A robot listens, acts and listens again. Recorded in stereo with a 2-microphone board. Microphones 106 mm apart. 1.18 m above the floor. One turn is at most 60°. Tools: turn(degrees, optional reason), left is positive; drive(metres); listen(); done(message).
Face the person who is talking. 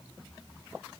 listen()
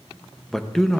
turn(degrees=30)
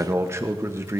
turn(degrees=-30, reason="So it is at 30° right.")
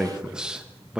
turn(degrees=-10, reason="The man speaking is now 10° right.")
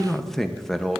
done("Found it: a man speaking, straight ahead.")